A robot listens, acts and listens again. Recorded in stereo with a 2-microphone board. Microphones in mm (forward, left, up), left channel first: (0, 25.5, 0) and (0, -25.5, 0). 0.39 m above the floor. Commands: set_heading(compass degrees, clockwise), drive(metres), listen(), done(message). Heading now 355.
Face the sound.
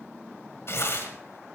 set_heading(300)
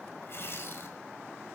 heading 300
set_heading(235)
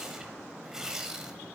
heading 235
set_heading(245)
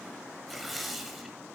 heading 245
done("Found it: tearing paper, straight ahead.")